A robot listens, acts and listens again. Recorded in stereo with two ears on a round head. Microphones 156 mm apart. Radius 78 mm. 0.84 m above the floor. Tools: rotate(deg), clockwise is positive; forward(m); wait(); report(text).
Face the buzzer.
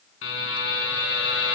rotate(-90)
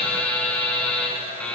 report("Facing the buzzer.")